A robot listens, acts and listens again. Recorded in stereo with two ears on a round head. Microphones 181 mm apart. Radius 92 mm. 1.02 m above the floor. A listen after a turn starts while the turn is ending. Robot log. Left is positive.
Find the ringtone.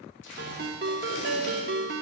note: The ringtone: about 55° right or 125° right.
cmd yaw -55
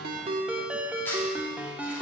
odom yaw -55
note: So it is at 10° right.
cmd yaw -10
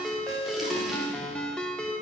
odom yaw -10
end: Facing the ringtone.